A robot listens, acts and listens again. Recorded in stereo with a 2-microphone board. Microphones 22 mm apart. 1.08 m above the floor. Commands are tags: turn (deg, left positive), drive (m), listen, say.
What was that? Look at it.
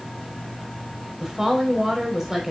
<turn deg="-20"/>
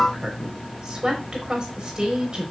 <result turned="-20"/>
<turn deg="-140"/>
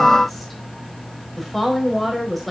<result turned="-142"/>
<say>Facing the woman speaking.</say>